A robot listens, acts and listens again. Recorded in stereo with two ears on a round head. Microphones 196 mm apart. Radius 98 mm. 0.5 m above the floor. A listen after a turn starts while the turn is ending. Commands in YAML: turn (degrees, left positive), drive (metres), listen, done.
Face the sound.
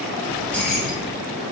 turn: 30
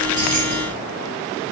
listen: true
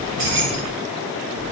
turn: -65
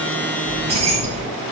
turn: -30
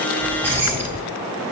turn: -10
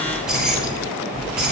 done: "Facing the keys jangling."